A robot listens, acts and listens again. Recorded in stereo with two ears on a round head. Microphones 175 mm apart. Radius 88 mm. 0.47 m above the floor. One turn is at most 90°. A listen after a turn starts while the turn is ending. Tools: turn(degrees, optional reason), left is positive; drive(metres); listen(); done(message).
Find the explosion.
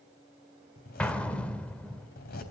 turn(degrees=30)
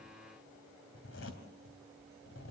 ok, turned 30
listen()
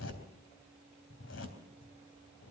done("I heard an explosion, but can't make it out now. It was about 25° right or 145° left.")